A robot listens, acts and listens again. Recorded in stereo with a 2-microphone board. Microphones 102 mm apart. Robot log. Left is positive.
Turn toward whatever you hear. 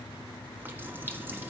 note: The running tap: about 20° right or 160° right.
cmd yaw -20
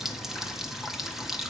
end: Facing the running tap, 1 to 2 m away.